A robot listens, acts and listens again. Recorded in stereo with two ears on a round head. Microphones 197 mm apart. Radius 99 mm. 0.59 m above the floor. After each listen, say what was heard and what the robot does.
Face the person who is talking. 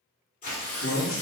The man speaking: about 60° left or 120° left. Turn 60° left.
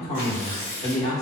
So it is at 35° left. Turn 35° left.
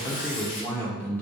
The man speaking is now 10° left. Turn 10° left.
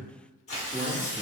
Facing the man speaking.